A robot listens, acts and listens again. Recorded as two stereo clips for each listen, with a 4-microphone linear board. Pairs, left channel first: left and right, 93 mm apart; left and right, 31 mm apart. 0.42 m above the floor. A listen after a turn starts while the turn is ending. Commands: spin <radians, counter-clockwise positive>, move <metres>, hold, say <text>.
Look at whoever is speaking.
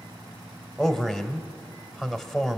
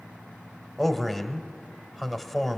spin 0.52
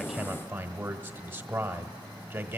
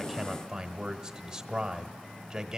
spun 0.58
spin -0.52
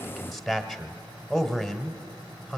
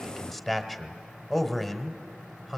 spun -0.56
say Facing the man speaking, 1 to 2 m away.